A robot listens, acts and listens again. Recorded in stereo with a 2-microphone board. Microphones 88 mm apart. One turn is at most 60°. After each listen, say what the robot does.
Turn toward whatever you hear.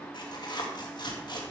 Turn 55° left.
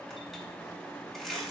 Found it: tearing paper, straight ahead, 2 to 4 m away.